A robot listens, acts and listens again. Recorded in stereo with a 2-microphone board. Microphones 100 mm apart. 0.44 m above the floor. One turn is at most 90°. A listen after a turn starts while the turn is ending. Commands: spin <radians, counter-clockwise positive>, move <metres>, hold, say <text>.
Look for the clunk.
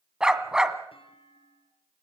spin 1.13
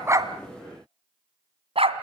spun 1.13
hold
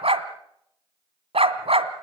say I heard a clunk, but can't make it out now. It was about straight ahead or 50° left.